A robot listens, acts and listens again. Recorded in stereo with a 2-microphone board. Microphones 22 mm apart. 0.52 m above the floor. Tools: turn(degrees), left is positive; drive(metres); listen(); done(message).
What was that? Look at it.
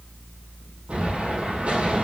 turn(degrees=-70)
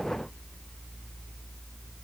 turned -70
listen()
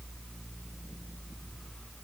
done("I heard an explosion, but can't make it out now. It was about straight ahead or 40° right.")